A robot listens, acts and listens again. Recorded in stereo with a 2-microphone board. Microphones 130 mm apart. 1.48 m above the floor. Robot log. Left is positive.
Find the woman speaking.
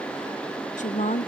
note: The woman speaking: about 75° left or 105° left.
cmd yaw +75
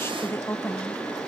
note: So it is at 20° left.
cmd yaw +20
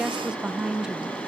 end: Found it: a woman speaking, straight ahead.